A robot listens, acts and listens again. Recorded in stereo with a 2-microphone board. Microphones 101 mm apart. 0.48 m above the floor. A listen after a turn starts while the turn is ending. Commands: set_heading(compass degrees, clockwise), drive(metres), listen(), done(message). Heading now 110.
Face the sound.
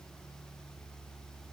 listen()
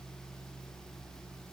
listen()
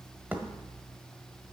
set_heading(125)
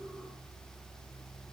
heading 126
listen()
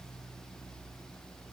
done("I heard a thud, but can't make it out now. It was about straight ahead or 145° right.")